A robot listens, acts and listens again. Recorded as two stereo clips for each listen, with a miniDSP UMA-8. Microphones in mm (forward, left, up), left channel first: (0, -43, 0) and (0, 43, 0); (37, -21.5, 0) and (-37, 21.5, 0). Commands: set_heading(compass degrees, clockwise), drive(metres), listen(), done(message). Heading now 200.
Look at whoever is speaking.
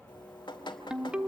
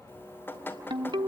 listen()
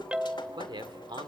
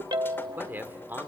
set_heading(110)
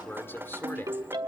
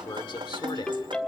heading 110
set_heading(140)
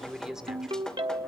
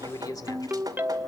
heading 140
done("Facing the man speaking.")